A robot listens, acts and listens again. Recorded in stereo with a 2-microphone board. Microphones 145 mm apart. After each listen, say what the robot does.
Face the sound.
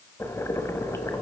Turn 20° left.
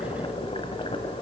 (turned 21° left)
Turn 135° left.
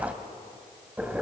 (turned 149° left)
Turn 10° right.
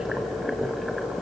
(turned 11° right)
Facing the boiling.